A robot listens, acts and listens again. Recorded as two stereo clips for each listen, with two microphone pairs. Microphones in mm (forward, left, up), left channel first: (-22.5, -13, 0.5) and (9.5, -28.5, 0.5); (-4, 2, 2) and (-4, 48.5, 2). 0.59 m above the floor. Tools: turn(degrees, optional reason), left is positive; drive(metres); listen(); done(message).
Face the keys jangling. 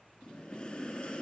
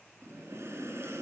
listen()
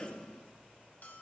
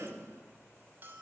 listen()
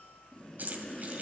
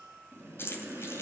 turn(degrees=-60, reason="The keys jangling: 60° right.")
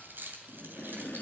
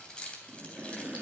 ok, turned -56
turn(degrees=-20, reason="The keys jangling is now 20° right.")
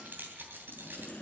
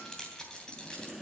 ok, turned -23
turn(degrees=-15, reason="The keys jangling is now 15° right.")
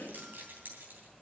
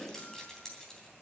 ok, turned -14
turn(degrees=-10, reason="The keys jangling is now 10° right.")
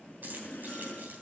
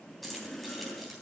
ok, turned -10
done("Facing the keys jangling.")